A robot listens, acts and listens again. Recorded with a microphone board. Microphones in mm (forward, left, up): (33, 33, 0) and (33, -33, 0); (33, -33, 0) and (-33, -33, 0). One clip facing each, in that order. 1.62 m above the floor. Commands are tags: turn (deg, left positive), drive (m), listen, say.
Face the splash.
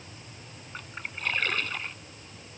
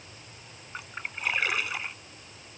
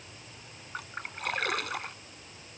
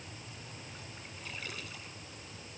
<turn deg="-10"/>
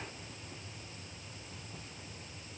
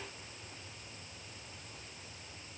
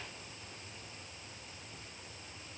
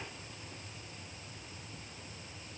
<say>I heard a splash from this way, but can't make it out now.</say>